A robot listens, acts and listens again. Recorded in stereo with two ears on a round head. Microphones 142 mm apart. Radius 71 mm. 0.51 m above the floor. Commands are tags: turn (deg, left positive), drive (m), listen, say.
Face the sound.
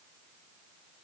<listen/>
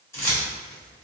<turn deg="15"/>
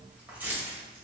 <turn deg="-10"/>
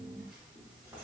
<listen/>
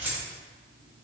<turn deg="-15"/>
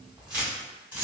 <turn deg="-10"/>
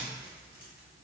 <listen/>
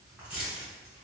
<say>Found it: keys jangling, straight ahead.</say>